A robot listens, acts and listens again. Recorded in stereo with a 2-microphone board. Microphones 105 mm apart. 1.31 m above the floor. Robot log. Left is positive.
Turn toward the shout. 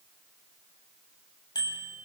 cmd idle
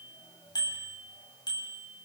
cmd idle
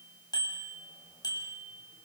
end: I can't make out a shout, only a bicycle bell.